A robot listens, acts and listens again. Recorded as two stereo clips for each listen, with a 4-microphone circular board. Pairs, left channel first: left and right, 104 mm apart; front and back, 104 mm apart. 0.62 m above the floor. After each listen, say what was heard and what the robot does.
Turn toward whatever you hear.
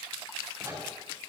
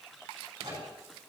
The microwave: 135° right. Turn 135° right.
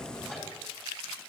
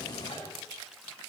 The microwave is now 10° left. Turn 10° left.
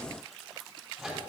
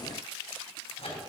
Facing the microwave.